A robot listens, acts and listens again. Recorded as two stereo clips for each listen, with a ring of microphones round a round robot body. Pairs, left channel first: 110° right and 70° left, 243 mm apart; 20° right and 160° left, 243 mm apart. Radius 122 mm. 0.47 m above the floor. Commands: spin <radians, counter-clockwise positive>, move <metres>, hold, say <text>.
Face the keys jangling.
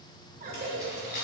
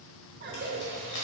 spin -1.05
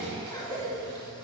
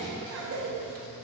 hold
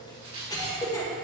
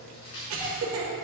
say Facing the keys jangling, 2 to 4 m away.